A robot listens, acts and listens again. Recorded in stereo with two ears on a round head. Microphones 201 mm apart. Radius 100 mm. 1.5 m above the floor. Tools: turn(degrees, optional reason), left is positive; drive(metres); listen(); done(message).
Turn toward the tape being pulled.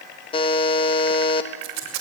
turn(degrees=-55, reason="The tape being pulled: about 55° right or 125° right.")
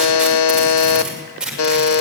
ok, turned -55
done("Facing the tape being pulled, over 4 m away.")